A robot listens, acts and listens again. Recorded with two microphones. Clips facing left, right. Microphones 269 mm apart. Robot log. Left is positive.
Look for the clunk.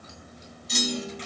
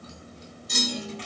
note: The clunk: about 60° right or 120° right.
cmd yaw -60
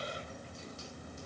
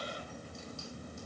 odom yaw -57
cmd idle
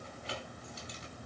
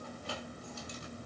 end: I heard a clunk, but can't make it out now. It was about straight ahead or 65° right.